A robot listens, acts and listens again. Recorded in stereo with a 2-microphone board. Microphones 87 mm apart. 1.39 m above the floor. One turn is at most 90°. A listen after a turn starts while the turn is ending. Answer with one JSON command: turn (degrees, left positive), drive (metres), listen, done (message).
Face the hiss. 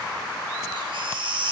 {"listen": true}
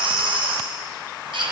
{"listen": true}
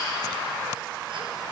{"done": "I can't make out a hiss, only a baby crying."}